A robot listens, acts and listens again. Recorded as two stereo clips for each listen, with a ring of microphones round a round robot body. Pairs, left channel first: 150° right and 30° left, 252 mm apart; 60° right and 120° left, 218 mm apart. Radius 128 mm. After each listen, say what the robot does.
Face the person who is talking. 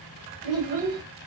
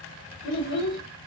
Turn 25° right.
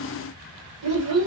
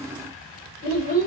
Turn 10° right.
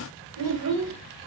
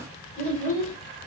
Facing the child speaking, 2 to 4 m away.